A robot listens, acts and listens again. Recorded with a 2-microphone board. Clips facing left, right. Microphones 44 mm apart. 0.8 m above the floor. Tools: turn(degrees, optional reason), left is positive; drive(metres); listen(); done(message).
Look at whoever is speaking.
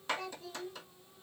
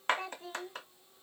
turn(degrees=-35, reason="The child speaking: about 35° right or 145° right.")
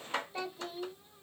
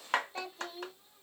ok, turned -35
done("Found it: a child speaking, straight ahead, under 1 m away.")